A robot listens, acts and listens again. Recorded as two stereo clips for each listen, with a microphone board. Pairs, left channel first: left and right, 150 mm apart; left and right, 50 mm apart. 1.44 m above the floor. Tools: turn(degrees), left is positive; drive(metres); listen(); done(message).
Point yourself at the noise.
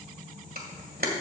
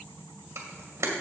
turn(degrees=-90)
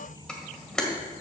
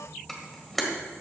done("Found it: a camera shutter, straight ahead.")